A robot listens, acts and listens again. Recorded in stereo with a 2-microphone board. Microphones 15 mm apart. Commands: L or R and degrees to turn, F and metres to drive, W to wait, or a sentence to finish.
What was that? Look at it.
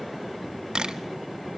R90
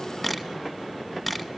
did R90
R10
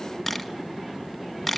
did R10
Facing the camera shutter.